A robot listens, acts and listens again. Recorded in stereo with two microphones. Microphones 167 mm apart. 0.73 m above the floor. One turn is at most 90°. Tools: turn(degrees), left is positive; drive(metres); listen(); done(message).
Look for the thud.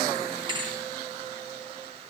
turn(degrees=-30)
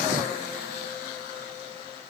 listen()
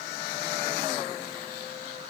done("I heard a thud, but can't make it out now. It was about straight ahead or 120° right.")